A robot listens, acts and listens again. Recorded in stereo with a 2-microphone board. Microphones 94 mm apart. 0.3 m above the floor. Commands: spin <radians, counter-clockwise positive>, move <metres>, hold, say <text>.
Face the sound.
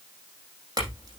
spin -0.79
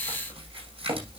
spin -1.57
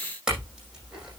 say Facing the clink.